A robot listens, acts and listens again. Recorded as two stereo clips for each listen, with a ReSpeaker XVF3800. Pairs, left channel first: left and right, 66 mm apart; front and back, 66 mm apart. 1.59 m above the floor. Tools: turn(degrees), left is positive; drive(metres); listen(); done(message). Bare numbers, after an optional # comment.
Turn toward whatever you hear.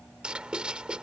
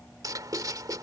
# The writing: 165° right.
turn(-165)
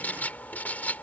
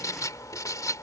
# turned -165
# The writing is now 25° left.
turn(25)
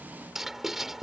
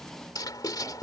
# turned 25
done("Found it: writing, straight ahead.")